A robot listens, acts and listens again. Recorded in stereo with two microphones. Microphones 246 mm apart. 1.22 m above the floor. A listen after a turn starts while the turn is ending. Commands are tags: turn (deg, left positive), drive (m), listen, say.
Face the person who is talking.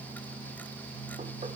<listen/>
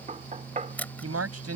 <turn deg="-75"/>
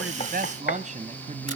<turn deg="-30"/>
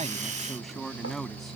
<say>Found it: a man speaking, straight ahead.</say>